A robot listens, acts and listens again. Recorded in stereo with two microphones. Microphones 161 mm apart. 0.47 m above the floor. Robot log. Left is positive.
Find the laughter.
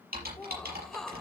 cmd yaw +30
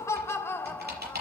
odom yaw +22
cmd yaw +30
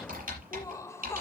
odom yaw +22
note: The laughter: about 20° left or 160° left.
cmd yaw +20
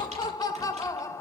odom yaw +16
note: The laughter: about 20° left or 160° left.
cmd yaw +20
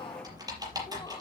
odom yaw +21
cmd idle
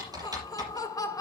note: So it is at 155° left.
cmd yaw +155
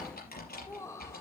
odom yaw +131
note: The laughter is now 20° left.
cmd yaw +20
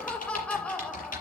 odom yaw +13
end: Found it: laughter, straight ahead.